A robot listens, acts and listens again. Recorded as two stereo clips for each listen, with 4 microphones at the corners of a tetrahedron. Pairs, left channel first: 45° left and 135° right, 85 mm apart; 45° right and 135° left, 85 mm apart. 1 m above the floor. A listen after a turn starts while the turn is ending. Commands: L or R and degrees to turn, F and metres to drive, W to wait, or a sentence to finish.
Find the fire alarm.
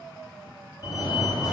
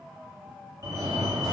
L85
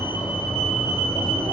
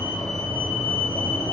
L15
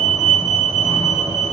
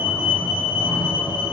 Facing the fire alarm, over 4 m away.